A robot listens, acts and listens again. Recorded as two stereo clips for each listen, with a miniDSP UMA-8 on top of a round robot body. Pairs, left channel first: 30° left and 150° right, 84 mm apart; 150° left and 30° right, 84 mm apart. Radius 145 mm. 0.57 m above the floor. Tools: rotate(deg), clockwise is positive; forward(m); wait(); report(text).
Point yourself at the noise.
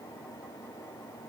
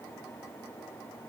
wait()
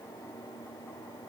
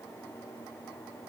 wait()
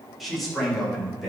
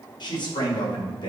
rotate(-120)
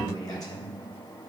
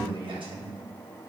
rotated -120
rotate(15)
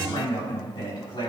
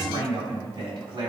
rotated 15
report("Found it: a man speaking, straight ahead, over 4 m away.")